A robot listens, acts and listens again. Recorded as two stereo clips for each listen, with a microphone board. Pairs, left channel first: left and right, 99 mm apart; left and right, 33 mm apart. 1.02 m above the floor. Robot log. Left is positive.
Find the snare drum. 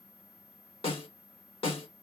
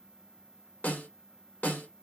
note: The snare drum: about 70° left or 110° left.
cmd yaw +70
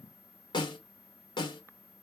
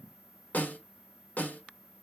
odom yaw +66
note: So it is at 45° left.
cmd yaw +45
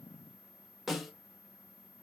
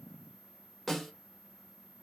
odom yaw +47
end: Facing the snare drum.